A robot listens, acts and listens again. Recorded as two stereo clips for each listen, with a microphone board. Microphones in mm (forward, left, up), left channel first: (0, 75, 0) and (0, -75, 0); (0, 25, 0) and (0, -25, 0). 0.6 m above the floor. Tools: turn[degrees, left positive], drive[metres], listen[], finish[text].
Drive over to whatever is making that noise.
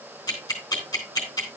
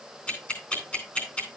Thought: The ticking: about 25° left or 155° left.
Action: turn[25]
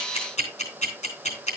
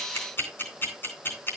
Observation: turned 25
Thought: So it is at 125° left.
Action: turn[125]
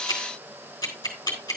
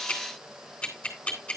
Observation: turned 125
Thought: The ticking is now 25° left.
Action: turn[25]
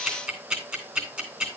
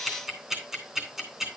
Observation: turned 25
Thought: The ticking is now 10° right.
Action: turn[-10]
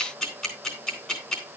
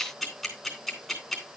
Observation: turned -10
Action: drive[1.0]
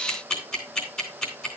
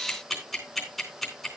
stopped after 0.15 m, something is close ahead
Action: finish[Blocked. The ticking is further on, straight ahead.]